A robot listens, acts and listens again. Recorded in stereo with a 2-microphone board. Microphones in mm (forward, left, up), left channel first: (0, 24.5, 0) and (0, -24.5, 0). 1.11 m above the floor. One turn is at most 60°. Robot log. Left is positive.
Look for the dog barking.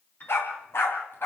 note: The dog barking: about 55° left or 125° left.
cmd yaw +55
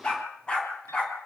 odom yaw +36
note: So it is at 20° left.
cmd yaw +20
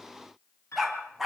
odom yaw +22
end: Facing the dog barking.